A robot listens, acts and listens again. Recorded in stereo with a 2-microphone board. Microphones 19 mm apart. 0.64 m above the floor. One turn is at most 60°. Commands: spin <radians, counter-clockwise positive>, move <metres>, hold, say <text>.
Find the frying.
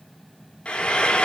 spin 1.05
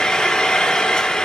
spin 0.96
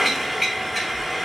say Facing the frying.